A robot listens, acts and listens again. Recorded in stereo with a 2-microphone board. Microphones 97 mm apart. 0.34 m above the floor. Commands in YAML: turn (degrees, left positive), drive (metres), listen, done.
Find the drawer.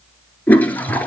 listen: true
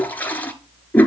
listen: true
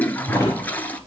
turn: -40
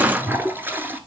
listen: true
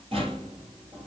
turn: -100
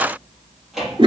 done: "Found it: a drawer, straight ahead, 2 to 4 m away."